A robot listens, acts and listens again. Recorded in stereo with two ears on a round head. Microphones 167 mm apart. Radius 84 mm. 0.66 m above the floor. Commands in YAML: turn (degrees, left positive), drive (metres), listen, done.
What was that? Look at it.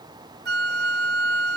turn: -60
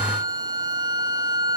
turn: -25
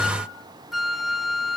done: "Facing the flute."